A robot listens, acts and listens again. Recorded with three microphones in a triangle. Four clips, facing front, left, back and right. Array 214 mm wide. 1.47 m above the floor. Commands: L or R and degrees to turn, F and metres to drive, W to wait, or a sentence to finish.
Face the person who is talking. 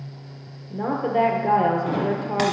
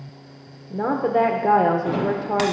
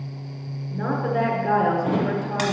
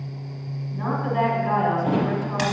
L70
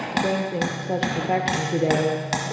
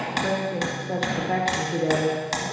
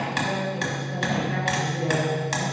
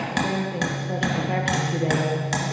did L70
L10
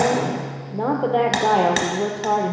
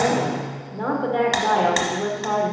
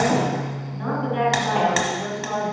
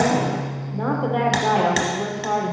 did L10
Found it: a woman speaking, straight ahead.